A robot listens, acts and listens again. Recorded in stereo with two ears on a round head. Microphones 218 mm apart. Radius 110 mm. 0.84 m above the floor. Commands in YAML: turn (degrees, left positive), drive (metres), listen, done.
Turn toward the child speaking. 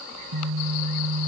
listen: true
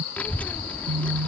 turn: 30
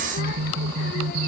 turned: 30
turn: 140
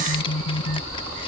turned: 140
turn: 20
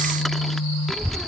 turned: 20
done: "Found it: a child speaking, straight ahead."